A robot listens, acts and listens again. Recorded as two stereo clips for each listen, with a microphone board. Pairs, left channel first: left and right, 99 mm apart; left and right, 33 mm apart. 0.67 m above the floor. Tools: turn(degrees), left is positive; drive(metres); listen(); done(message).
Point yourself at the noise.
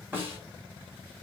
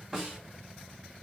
turn(degrees=-20)
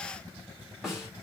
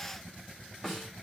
done("Found it: a snare drum, straight ahead, 2 to 4 m away.")